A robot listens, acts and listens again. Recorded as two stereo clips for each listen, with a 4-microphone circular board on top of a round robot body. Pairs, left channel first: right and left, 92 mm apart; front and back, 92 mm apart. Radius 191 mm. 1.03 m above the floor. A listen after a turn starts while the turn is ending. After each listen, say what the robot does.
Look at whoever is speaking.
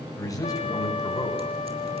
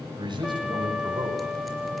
Turn 140° right.
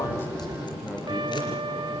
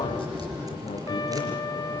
Keep listening.
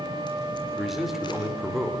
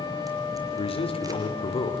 Found it: a man speaking, straight ahead.